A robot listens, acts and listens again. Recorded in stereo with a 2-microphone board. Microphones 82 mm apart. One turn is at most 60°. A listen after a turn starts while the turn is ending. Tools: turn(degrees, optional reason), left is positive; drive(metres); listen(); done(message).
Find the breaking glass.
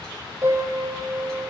listen()
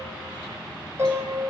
listen()
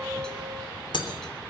turn(degrees=60)
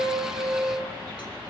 turn(degrees=30, reason="Nothing new. It was at 30° left.")
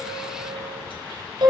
done("I heard breaking glass from this way, but can't make it out now.")